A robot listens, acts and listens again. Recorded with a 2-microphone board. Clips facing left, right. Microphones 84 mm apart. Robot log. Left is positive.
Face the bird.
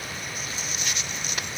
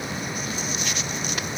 cmd idle
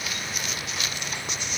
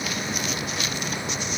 cmd idle
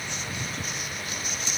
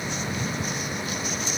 end: I can't make out a bird to turn to.